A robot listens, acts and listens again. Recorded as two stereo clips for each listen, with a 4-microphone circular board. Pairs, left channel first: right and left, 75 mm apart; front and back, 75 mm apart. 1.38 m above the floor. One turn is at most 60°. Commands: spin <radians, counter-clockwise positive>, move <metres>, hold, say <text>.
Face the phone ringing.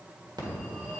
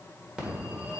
spin 1.05
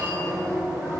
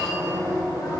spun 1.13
spin 0.61
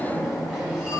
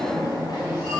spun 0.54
say Found it: a phone ringing, straight ahead, 1 to 2 m away.